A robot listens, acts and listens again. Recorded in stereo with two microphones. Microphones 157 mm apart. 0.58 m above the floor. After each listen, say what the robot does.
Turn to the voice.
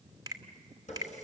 Keep listening.
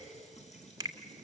Keep listening.
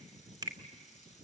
I can't make out anyone speaking, only a finger snap and a running tap.